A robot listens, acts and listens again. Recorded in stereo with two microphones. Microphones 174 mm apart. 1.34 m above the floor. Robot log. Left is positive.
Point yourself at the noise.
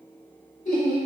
note: The laughter: about 50° left or 130° left.
cmd yaw +50
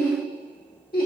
note: So it is at 55° left.
cmd yaw +55
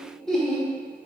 end: Found it: laughter, straight ahead, 1 to 2 m away.